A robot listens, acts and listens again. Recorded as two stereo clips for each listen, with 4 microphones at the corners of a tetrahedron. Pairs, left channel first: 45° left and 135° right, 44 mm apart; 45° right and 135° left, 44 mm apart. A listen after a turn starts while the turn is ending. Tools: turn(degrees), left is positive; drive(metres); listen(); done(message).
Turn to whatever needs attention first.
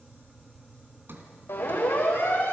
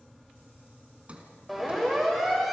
turn(degrees=50)
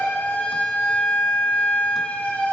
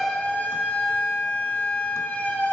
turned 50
done("Found it: a siren, straight ahead.")